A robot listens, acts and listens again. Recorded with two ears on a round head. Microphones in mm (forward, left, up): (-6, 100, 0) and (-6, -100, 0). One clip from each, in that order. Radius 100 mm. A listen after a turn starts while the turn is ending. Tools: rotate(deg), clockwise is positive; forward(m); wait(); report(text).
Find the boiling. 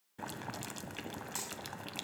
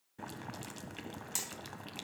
rotate(-30)
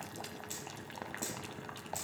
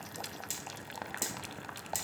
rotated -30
rotate(20)
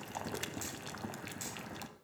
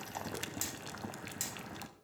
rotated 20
report("Found it: boiling, straight ahead.")